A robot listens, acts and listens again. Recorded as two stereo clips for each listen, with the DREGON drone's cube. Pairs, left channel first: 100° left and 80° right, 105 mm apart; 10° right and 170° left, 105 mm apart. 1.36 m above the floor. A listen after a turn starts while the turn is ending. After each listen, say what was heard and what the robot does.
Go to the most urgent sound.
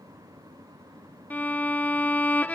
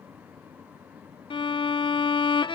Keep listening.
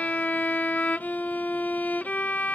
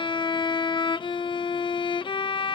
Keep listening.
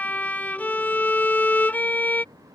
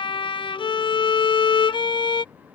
I can't make out anything urgent to turn to.